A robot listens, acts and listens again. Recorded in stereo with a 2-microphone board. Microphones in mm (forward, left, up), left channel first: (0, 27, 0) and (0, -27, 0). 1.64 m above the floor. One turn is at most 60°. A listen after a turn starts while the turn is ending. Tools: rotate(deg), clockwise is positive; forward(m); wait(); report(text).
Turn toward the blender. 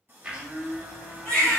rotate(20)
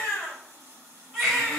wait()
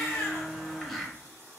report("Found it: a blender, straight ahead.")